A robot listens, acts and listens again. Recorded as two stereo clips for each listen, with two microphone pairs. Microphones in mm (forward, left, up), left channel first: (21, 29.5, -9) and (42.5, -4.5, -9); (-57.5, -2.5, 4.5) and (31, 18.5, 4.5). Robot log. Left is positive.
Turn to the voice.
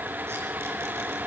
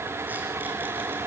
cmd idle
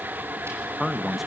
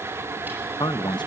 note: The man speaking: 140° right.
cmd yaw -140
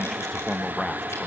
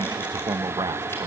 note: The man speaking is now 45° left.
cmd yaw +45
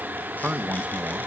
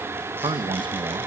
end: Found it: a man speaking, straight ahead.